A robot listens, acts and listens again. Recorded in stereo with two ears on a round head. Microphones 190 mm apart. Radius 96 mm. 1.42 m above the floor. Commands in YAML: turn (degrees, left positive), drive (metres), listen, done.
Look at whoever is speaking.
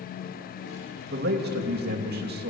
turn: -45
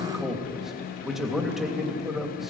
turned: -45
done: "Facing the man speaking, 2 to 4 m away."